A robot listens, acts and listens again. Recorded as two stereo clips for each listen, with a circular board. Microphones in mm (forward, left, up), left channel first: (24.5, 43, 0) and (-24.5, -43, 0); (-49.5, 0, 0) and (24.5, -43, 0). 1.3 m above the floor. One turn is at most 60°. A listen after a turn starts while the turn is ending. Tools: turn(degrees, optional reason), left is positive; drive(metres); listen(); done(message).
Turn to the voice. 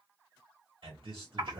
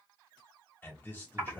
turn(degrees=-60, reason="The man speaking: 140° right.")
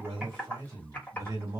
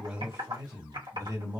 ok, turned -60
turn(degrees=-60, reason="The man speaking is now 65° right.")
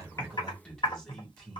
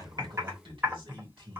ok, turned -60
turn(degrees=-20, reason="The man speaking is now 20° right.")
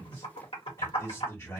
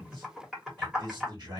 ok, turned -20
done("Facing the man speaking.")